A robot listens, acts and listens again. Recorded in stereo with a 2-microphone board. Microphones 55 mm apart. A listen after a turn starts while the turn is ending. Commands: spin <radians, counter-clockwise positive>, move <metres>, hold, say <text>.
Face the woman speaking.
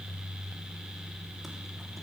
hold
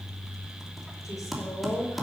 spin 1.57
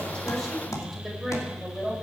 say Found it: a woman speaking, straight ahead.